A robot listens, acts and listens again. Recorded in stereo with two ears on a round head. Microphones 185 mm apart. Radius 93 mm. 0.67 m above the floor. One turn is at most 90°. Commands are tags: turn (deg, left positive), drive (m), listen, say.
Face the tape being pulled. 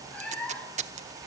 <turn deg="-35"/>
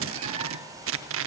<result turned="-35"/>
<turn deg="-90"/>
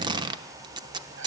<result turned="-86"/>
<turn deg="-20"/>
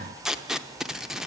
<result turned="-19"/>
<say>Facing the tape being pulled, under 1 m away.</say>